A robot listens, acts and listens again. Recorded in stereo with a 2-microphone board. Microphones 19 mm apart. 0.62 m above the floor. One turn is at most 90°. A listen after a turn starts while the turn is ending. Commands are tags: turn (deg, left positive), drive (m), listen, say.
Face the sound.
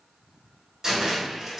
<turn deg="-30"/>
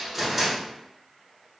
<say>Facing the cupboard door.</say>